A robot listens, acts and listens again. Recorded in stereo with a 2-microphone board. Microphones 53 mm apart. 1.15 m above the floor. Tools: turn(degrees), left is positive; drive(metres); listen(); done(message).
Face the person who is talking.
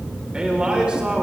turn(degrees=-15)
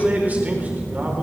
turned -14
turn(degrees=-150)
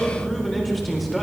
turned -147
done("Facing the man speaking, over 4 m away.")